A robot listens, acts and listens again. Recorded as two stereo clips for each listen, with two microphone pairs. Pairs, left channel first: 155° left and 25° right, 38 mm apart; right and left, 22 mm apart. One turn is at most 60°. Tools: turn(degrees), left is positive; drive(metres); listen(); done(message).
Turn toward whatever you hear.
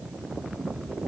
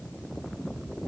listen()
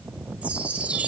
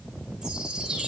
turn(degrees=35)
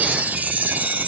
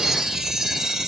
turn(degrees=20)
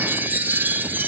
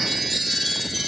turn(degrees=10)
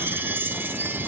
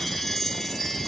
done("Found it: a chime, straight ahead.")